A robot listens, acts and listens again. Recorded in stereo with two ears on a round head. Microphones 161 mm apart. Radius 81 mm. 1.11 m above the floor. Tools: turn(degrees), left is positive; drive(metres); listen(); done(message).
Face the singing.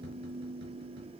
listen()
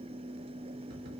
listen()
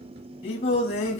turn(degrees=40)
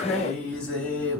turn(degrees=10)
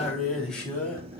done("Found it: singing, straight ahead.")